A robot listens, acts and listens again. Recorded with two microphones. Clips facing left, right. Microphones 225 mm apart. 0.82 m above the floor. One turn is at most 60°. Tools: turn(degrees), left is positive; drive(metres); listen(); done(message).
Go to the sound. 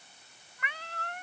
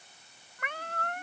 turn(degrees=-50)
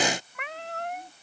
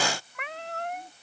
drive(metres=1.0)
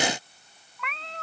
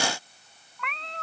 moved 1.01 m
drive(metres=1.0)
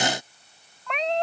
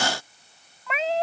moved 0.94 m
drive(metres=1.0)
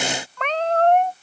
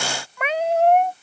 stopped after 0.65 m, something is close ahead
turn(degrees=-10)
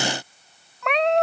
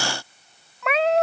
done("I am next to the cat meowing.")